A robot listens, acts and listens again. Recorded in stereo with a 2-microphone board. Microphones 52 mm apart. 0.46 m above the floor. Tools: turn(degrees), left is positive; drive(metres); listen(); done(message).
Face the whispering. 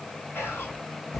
turn(degrees=45)
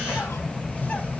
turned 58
listen()
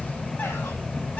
listen()
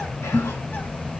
done("I heard whispering, but can't make it out now. It was about 10° right or 75° left.")